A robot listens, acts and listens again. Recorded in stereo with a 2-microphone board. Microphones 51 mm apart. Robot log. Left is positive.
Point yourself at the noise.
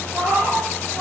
note: The cat meowing: about 75° right or 105° right.
cmd yaw -75
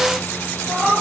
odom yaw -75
note: So it is at 20° right.
cmd yaw -20
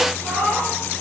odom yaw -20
end: Facing the cat meowing, 2 to 4 m away.